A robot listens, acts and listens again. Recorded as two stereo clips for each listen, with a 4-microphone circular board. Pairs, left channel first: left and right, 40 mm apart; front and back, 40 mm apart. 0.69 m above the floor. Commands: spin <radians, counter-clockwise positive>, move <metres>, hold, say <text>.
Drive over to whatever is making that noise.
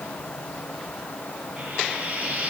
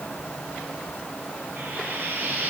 spin -2.44
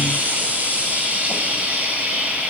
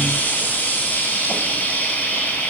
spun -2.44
spin -0.70
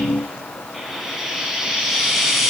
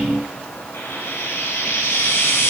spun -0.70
move 1.0
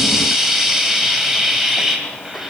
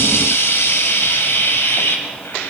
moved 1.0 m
spin -0.17
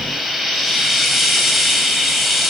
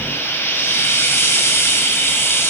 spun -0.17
move 1.0
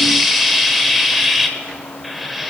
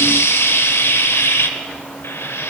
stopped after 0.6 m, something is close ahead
say Arrived at the frying, straight ahead.